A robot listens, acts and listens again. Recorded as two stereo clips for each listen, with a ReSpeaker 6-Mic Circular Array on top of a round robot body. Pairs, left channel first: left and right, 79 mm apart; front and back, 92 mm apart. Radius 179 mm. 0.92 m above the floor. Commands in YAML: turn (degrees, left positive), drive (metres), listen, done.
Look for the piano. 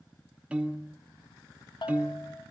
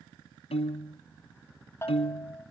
turn: -15
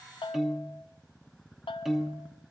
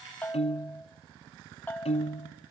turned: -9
done: "Found it: a piano, straight ahead."